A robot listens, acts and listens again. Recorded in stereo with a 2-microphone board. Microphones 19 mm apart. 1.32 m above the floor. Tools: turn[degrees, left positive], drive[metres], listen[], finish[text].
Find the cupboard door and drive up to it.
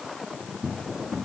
Action: turn[30]
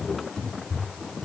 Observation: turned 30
Thought: So it is at 150° left.
Action: turn[150]
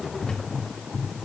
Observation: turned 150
Thought: The cupboard door is now 40° left.
Action: turn[40]
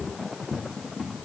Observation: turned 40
Thought: The cupboard door is now 20° right.
Action: turn[-20]
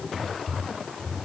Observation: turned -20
Action: drive[1.0]
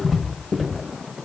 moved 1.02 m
Action: drive[1.0]
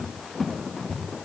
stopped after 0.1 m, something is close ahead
Action: finish[I am next to the cupboard door.]